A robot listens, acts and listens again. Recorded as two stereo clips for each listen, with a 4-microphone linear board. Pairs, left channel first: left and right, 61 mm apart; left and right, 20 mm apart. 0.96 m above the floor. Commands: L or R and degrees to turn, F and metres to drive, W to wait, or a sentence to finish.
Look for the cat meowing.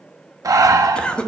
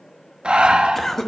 W
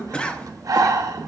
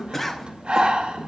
W
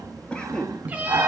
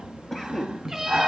R25
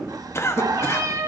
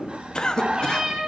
R125
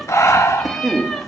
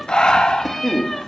Found it: a cat meowing, straight ahead, 1 to 2 m away.